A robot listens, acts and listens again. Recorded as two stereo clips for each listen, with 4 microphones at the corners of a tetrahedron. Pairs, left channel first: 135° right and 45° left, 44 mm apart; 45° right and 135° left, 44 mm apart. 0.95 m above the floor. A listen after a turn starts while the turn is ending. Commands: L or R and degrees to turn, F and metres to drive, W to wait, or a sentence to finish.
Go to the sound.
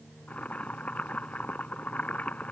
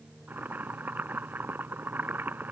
L170
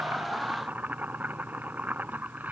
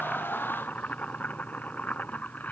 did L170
F1.0
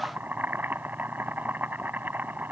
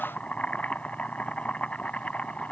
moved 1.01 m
L10
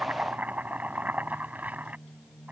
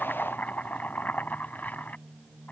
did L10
F1.0
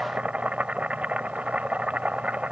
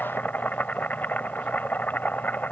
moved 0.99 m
R10
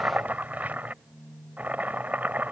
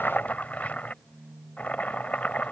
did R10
F1.0
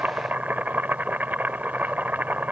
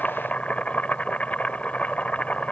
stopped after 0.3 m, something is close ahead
I am next to the boiling.